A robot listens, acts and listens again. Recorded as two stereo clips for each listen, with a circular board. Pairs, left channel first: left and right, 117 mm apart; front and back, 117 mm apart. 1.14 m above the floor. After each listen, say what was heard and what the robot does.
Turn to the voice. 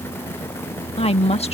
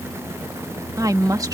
The woman speaking: 120° left. Turn 120° left.
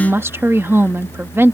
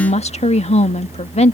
The woman speaking is now 20° right. Turn 20° right.
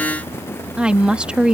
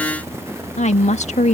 The woman speaking is now 10° right. Turn 10° right.
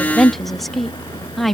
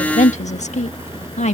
Facing the woman speaking.